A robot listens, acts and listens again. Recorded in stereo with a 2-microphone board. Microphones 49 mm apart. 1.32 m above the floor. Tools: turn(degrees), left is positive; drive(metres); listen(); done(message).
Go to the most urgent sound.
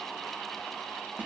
listen()
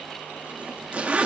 listen()
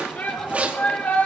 turn(degrees=30)
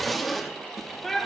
drive(metres=1.0)
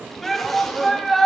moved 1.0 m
drive(metres=1.0)
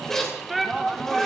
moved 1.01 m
drive(metres=1.0)
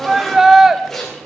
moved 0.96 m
turn(degrees=-15)
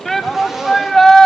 drive(metres=1.0)
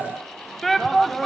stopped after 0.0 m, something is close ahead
done("Arrived at the shout, straight ahead.")